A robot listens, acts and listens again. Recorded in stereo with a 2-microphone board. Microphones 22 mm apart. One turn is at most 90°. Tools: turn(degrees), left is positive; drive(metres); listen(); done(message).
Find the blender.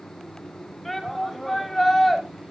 listen()
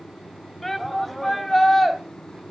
listen()
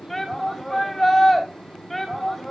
done("I can't make out a blender, only a shout.")